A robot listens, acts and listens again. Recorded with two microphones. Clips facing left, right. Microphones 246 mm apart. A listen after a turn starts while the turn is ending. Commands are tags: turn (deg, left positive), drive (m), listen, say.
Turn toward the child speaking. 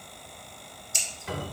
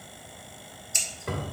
<listen/>
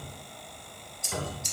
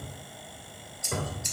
<listen/>
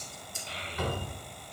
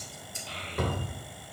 <turn deg="15"/>
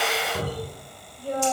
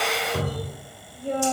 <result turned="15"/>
<turn deg="-25"/>
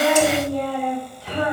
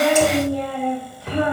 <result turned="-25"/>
<turn deg="-15"/>
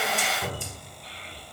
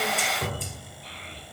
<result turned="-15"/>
<say>Facing the child speaking, 2 to 4 m away.</say>